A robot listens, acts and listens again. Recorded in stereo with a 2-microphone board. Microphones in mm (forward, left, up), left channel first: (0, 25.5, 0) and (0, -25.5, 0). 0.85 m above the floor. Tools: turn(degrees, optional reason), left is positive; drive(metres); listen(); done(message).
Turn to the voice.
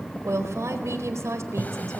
turn(degrees=-75, reason="The woman speaking: about 75° right or 105° right.")
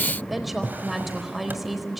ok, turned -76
done("Found it: a woman speaking, straight ahead, over 4 m away.")